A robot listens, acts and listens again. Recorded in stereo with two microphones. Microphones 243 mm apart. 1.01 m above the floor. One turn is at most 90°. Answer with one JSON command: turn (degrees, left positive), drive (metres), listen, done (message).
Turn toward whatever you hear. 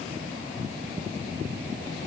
{"listen": true}
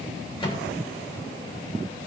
{"turn": 20}
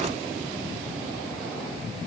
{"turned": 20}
{"listen": true}
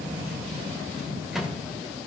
{"done": "Facing the microwave."}